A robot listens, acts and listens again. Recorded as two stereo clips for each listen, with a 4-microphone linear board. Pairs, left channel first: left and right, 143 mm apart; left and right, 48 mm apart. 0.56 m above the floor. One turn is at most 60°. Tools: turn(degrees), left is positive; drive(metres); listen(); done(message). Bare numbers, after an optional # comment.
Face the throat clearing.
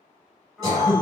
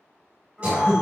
# The throat clearing: about 25° right or 155° right.
turn(-25)
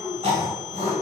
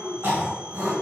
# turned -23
# So it is at 130° right.
turn(-60)
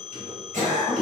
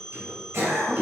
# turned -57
# The throat clearing is now 70° right.
turn(-60)
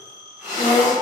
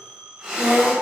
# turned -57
# The throat clearing is now 15° right.
turn(-15)
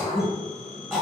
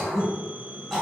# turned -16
done("Found it: throat clearing, straight ahead, 1 to 2 m away.")